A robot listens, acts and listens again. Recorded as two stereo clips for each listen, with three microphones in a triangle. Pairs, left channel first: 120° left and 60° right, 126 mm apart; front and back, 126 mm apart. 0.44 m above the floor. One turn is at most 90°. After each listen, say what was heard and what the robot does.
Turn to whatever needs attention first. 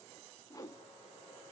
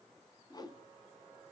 Keep listening.
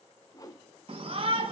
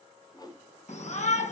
The shout: 20° right. Turn 20° right.
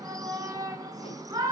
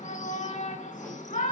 Facing the shout, 2 to 4 m away.